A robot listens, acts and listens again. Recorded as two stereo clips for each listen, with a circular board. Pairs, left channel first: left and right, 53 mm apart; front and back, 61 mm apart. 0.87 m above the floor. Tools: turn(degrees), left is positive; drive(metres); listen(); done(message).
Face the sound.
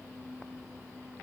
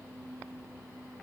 listen()
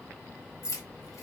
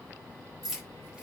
turn(degrees=95)
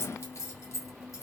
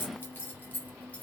turn(degrees=70)
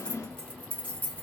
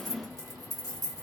turn(degrees=35)
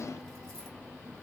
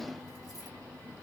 listen()
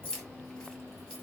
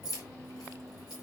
turn(degrees=15)
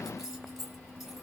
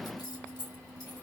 done("Found it: keys jangling, straight ahead, 1 to 2 m away.")